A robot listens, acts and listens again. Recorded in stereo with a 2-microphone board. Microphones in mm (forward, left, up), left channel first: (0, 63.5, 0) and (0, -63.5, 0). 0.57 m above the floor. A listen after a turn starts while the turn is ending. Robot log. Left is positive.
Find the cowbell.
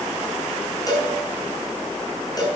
note: The cowbell: about 30° left or 150° left.
cmd yaw +30
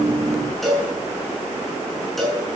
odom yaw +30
end: Found it: a cowbell, straight ahead.